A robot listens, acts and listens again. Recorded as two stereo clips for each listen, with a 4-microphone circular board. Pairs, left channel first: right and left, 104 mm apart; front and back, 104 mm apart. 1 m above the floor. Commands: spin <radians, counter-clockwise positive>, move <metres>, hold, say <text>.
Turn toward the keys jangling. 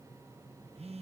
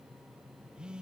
hold
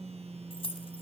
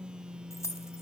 spin -1.05
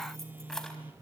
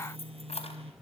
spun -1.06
say Facing the keys jangling.